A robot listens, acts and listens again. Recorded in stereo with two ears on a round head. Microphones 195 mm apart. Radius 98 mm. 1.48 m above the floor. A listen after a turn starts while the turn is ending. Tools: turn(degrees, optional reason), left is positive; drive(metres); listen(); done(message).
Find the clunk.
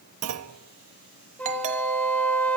turn(degrees=-90)
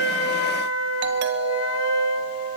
done("I heard a clunk from this way, but can't make it out now.")